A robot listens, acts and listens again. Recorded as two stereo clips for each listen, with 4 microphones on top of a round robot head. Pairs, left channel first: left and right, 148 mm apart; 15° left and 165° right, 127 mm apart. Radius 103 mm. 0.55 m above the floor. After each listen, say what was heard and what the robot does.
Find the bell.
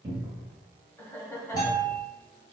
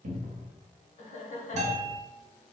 The bell: 160° left. Turn 160° left.
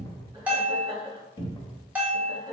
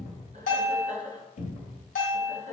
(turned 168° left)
The bell is now 10° right. Turn 10° right.
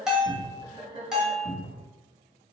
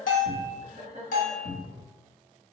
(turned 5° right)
Found it: a bell, straight ahead, 1 to 2 m away.